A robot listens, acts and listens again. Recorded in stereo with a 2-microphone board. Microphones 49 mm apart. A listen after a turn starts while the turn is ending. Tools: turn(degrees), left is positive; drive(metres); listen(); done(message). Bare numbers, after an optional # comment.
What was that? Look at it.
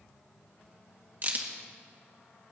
# The crack: about 45° right or 135° right.
turn(-45)
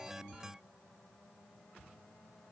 listen()
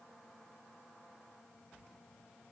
done("I heard a crack, but can't make it out now. It was about straight ahead or 90° right.")